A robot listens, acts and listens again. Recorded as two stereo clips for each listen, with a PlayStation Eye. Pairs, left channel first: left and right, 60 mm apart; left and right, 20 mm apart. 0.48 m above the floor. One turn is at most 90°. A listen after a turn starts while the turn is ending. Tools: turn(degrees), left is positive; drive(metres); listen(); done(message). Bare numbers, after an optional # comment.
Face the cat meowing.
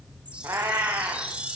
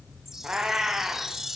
# The cat meowing: about 40° right or 140° right.
turn(-40)
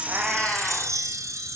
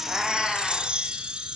done("Facing the cat meowing, 2 to 4 m away.")